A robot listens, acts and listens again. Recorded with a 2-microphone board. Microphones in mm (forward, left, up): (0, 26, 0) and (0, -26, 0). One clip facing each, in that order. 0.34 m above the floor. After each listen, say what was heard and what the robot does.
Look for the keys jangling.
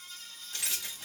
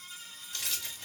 The keys jangling: about 20° left or 160° left. Turn 20° left.
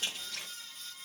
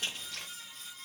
Facing the keys jangling.